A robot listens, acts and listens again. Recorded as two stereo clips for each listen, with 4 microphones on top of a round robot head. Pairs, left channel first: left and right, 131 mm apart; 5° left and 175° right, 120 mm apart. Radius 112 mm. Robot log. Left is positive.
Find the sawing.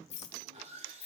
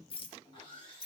note: The sawing: 50° right.
cmd yaw -50
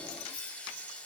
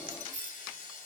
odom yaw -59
note: The sawing is now 10° left.
cmd yaw +10
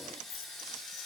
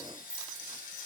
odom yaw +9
end: Found it: sawing, straight ahead.